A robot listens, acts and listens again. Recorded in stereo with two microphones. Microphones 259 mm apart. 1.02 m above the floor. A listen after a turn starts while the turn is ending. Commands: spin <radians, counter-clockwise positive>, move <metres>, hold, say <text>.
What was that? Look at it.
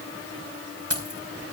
spin -1.13
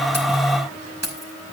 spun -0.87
spin -1.22
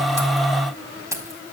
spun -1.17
spin -0.17
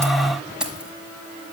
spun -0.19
say Found it: keys jangling, straight ahead.